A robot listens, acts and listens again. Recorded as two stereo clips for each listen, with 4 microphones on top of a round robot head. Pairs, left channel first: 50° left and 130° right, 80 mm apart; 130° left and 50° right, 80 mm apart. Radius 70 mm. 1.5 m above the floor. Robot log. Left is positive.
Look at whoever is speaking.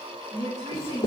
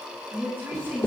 note: The woman speaking: 110° right.
cmd yaw -110
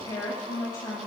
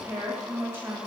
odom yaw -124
note: The woman speaking is now 15° left.
cmd yaw +15
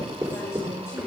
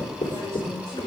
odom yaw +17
cmd idle
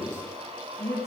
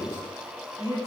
end: Facing the woman speaking, over 4 m away.